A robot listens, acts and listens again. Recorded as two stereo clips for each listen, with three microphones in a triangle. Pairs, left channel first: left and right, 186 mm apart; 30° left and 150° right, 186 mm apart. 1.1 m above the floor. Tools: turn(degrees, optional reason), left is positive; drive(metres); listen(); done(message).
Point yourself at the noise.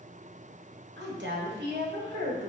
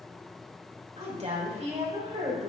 turn(degrees=-95, reason="The woman speaking: 95° right.")
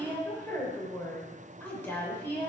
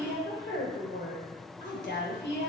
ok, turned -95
turn(degrees=10, reason="The woman speaking is now 10° left.")
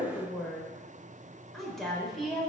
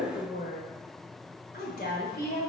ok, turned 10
done("Facing the woman speaking, 2 to 4 m away.")